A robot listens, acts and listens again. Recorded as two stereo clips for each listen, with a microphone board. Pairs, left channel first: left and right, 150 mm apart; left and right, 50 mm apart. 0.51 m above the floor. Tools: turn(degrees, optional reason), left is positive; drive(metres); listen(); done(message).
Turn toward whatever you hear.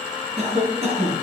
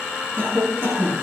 turn(degrees=-45, reason="The cough: about 45° right or 135° right.")
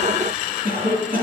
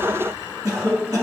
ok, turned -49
turn(degrees=-85, reason="So it is at 85° right.")
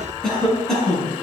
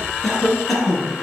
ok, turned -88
done("Found it: a cough, straight ahead, over 4 m away.")